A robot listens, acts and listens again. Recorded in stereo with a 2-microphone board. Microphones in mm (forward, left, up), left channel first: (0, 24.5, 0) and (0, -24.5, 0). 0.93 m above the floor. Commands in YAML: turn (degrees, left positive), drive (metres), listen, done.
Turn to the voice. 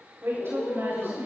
turn: -55
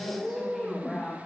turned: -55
done: "Found it: a woman speaking, straight ahead, over 4 m away."